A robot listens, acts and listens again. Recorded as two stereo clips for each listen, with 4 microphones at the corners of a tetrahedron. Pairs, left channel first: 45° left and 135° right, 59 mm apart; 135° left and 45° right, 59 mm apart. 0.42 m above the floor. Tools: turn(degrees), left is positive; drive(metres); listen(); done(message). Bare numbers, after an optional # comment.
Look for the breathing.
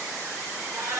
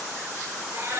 listen()
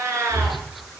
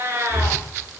# The breathing: 135° right.
turn(-135)
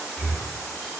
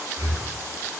# The breathing is now 60° right.
turn(-60)
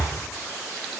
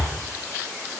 done("Facing the breathing, over 4 m away.")